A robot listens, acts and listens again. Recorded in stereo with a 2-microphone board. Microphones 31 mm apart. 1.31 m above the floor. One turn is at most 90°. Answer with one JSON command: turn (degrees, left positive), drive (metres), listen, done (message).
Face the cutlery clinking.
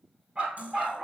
{"turn": -45}
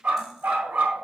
{"listen": true}
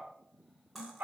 {"done": "Facing the cutlery clinking, 2 to 4 m away."}